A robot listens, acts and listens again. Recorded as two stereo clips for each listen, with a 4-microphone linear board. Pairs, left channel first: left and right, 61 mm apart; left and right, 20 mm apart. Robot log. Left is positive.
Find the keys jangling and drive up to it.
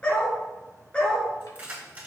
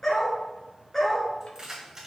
note: The keys jangling: about 25° right or 155° right.
cmd yaw -25
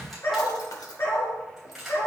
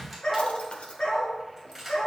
cmd fwd 1.0
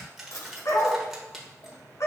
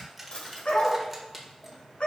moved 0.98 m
cmd fwd 1.0
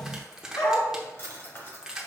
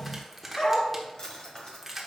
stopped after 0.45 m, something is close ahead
note: The keys jangling is now 15° right.
cmd yaw -15
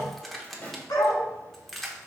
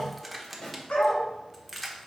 end: Arrived at the keys jangling, straight ahead.